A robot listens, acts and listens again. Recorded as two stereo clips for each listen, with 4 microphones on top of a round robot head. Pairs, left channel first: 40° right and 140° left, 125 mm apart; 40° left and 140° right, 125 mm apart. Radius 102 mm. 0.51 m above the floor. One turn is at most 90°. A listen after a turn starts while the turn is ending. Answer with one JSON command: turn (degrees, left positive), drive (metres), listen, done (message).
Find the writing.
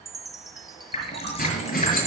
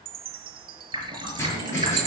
{"turn": -35}
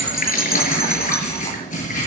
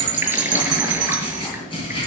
{"turn": -15}
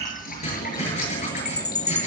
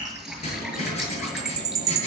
{"done": "Found it: writing, straight ahead."}